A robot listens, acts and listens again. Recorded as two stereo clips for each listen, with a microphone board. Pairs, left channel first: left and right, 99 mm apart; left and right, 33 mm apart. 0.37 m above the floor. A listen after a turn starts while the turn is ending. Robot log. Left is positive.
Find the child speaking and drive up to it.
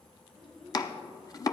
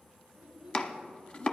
cmd yaw +30
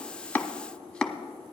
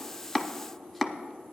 cmd idle
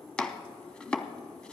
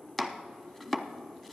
cmd idle
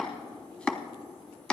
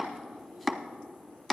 end: I heard a child speaking, but can't make it out now. It was about 30° right or 150° left. I did not reach it.